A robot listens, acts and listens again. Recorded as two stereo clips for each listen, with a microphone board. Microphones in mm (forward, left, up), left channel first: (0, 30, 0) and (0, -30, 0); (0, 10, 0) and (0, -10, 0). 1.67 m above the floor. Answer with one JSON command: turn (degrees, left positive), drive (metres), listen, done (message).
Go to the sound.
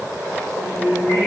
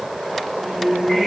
{"turn": 55}
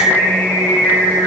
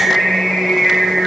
{"turn": 70}
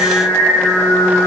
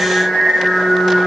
{"turn": 10}
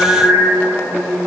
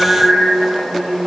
{"drive": 1.0}
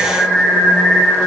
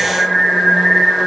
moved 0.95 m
{"drive": 1.0}
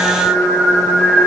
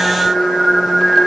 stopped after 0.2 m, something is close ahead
{"done": "Arrived at the singing, straight ahead."}